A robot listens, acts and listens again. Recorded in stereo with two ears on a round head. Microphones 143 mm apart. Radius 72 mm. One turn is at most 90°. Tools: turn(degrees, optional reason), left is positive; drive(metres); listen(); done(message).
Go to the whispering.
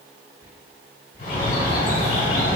turn(degrees=-15, reason="The whispering: about 15° right or 165° right.")
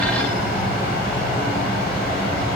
listen()
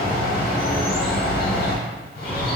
listen()
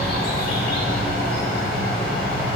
done("I heard whispering, but can't make it out now. It was about straight ahead or 150° right. I did not reach it.")